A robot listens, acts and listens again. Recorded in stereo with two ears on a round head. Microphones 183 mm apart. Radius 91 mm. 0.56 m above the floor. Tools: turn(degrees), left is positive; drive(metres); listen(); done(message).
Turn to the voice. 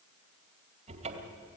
listen()
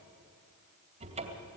listen()
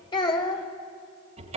turn(degrees=25)
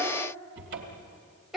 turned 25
done("Facing the child speaking, 2 to 4 m away.")